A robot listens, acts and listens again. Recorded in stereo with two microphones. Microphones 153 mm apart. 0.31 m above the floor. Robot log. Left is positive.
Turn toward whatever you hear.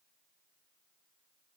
cmd idle
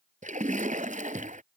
note: The splash: about 55° right or 125° right.
cmd yaw -55
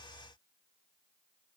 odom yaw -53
cmd idle
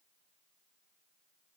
end: I heard a splash, but can't make it out now. It was about straight ahead or 70° right.